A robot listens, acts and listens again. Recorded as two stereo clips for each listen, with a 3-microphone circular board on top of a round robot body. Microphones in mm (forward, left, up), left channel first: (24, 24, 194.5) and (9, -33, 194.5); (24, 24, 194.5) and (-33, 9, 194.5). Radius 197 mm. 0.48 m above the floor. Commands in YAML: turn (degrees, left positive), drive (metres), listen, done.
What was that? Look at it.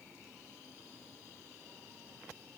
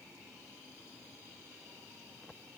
listen: true
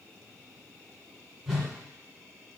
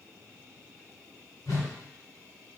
turn: -20
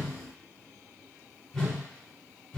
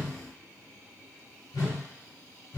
turn: -10
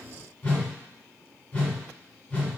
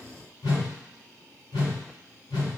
done: "Facing the whoosh, 1 to 2 m away."